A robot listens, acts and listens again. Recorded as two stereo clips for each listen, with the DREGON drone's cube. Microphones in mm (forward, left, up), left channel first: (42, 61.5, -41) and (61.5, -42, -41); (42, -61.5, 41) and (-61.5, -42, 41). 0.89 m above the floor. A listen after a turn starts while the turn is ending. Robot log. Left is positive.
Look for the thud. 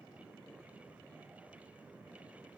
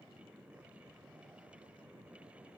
cmd idle
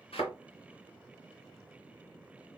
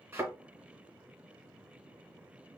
note: The thud: 100° left.
cmd yaw +100
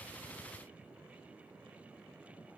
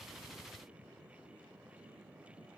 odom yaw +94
end: Facing where the thud came from. I can't hear it now.